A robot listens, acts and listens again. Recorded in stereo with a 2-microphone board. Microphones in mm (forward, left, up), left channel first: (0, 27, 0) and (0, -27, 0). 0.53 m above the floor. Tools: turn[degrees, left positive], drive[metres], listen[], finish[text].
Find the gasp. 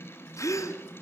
Action: turn[90]
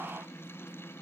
Action: finish[I heard a gasp from this way, but can't make it out now.]